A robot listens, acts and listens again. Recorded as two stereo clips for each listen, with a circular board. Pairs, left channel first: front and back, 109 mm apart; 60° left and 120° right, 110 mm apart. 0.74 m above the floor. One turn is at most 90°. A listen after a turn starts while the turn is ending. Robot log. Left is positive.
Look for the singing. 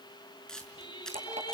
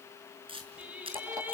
note: The singing: 45° right.
cmd yaw -45
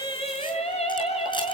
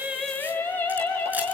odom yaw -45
note: The singing is now 15° right.
cmd yaw -15
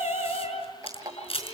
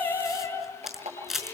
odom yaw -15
end: Found it: singing, straight ahead, over 4 m away.